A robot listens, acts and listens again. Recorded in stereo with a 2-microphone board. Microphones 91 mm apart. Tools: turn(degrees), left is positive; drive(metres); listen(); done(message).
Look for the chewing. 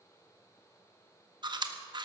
turn(degrees=-55)
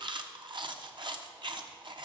turn(degrees=-65)
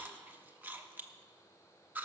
turn(degrees=-20)
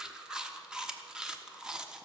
turn(degrees=-10)
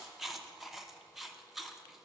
done("Facing the chewing.")